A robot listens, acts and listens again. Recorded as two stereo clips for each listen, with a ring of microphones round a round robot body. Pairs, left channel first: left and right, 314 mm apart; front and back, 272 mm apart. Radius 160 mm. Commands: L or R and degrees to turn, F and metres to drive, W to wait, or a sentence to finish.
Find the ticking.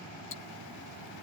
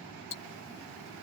L40
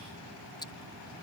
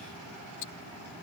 L15
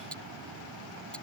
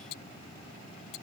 Found it: ticking, straight ahead.